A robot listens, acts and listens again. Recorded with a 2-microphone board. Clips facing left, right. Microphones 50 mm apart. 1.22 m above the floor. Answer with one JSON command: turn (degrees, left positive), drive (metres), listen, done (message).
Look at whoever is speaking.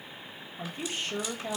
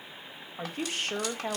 {"turn": -55}
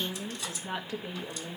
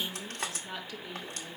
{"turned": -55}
{"turn": 40}
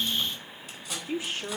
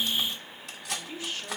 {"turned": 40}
{"turn": 20}
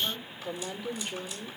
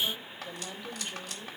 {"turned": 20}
{"done": "Found it: a woman speaking, straight ahead, 2 to 4 m away."}